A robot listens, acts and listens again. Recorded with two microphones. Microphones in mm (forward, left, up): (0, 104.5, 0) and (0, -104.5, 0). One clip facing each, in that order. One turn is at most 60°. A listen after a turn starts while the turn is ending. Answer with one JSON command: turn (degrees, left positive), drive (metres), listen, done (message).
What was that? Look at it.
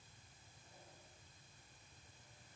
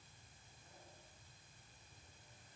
{"listen": true}
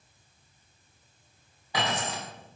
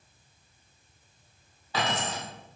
{"turn": 30}
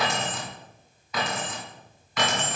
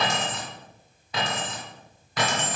{"turn": -40}
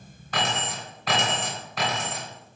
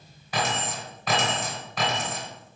{"done": "Found it: keys jangling, straight ahead, 2 to 4 m away."}